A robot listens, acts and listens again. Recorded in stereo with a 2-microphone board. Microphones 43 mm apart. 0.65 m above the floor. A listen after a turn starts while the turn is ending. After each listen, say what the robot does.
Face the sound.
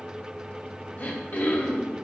Turn 45° left.
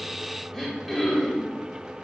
Facing the throat clearing, 1 to 2 m away.